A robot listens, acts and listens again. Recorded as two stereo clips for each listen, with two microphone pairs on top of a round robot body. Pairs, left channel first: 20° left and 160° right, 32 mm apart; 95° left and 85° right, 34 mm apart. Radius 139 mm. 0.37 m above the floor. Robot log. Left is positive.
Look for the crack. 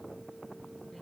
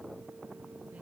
cmd idle
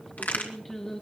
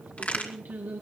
note: The crack: 50° left.
cmd yaw +50
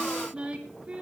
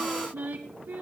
end: I heard a crack from this way, but can't make it out now.